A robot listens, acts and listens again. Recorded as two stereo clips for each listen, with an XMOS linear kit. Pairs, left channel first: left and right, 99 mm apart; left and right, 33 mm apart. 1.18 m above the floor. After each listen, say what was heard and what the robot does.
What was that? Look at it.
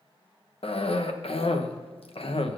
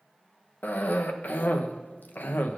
The cough: about 70° left or 110° left. Turn 70° left.
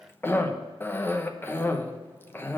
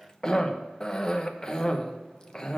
So it is at 25° left. Turn 25° left.
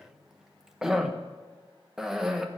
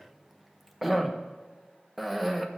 Facing the cough.